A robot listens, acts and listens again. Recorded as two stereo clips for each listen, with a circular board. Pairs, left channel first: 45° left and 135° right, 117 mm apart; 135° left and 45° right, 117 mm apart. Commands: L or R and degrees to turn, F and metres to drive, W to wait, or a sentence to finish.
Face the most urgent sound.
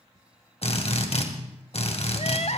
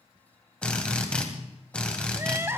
L25
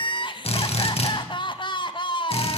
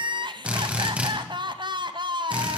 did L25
Facing the crying.